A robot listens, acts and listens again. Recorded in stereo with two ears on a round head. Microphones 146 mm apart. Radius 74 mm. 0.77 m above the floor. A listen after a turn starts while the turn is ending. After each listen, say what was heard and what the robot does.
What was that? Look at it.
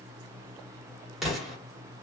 Turn 30° left.
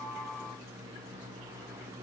Keep listening.
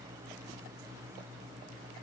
I heard an explosion, but can't make it out now. It was about 30° right or 150° left.